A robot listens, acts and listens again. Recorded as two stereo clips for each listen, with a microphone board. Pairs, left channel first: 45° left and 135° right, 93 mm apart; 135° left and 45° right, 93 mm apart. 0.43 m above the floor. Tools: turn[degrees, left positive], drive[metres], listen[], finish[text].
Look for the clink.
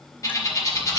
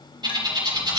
Action: listen[]
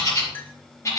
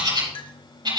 Thought: The clink: 115° left.
Action: turn[115]
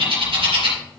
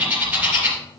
Action: listen[]
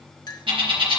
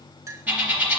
Action: finish[Found it: a clink, straight ahead, 1 to 2 m away.]